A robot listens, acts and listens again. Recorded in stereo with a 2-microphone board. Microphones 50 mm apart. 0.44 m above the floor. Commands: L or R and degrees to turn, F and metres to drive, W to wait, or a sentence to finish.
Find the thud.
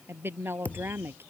L35
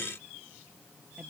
W
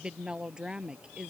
I heard a thud, but can't make it out now. It was about straight ahead or 110° left.